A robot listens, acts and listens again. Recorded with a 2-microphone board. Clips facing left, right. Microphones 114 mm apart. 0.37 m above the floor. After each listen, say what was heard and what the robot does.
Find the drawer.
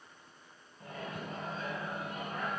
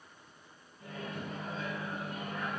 Keep listening.
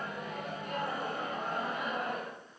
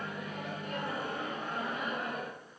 Keep listening.
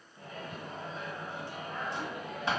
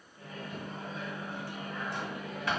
The drawer: about 25° left or 155° left. Turn 25° left.
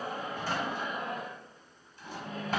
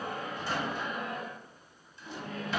So it is at 130° left. Turn 130° left.
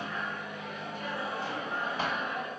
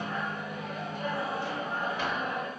The drawer is now 50° left. Turn 50° left.
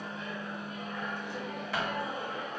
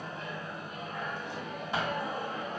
The drawer is now 20° right. Turn 20° right.
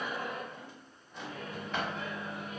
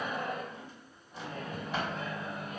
Found it: a drawer, straight ahead, 1 to 2 m away.